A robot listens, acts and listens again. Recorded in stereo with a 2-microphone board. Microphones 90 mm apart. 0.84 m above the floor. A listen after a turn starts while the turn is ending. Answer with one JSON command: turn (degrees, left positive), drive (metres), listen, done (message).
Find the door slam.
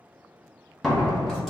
{"turn": 30}
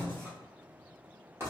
{"listen": true}
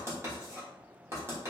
{"done": "I heard a door slam, but can't make it out now. It was about 25° right or 145° left."}